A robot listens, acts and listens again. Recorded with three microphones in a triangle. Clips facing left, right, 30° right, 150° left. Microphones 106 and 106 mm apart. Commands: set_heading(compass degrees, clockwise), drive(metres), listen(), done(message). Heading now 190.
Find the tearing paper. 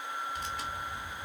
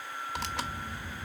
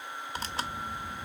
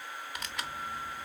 set_heading(280)
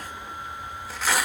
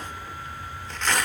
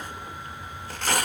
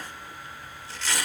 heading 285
done("Facing the tearing paper, under 1 m away.")